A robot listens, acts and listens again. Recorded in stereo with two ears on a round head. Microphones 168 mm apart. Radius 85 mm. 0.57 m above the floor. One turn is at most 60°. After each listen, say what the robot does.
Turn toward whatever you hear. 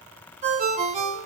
Turn 40° right.
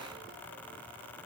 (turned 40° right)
Keep listening.
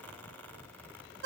Turn 60° right.
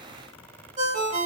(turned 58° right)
Turn 40° right.
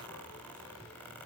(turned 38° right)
Keep listening.
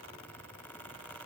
Keep listening.
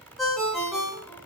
Found it: a ringtone, straight ahead, 1 to 2 m away.